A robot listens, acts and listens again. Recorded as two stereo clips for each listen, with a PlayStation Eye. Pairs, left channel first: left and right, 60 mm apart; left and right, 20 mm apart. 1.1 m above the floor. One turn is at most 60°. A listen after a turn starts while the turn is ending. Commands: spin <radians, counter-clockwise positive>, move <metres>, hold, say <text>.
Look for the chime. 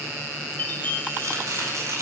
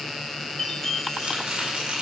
spin 0.52
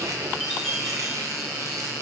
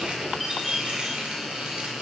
say Found it: a chime, straight ahead, 2 to 4 m away.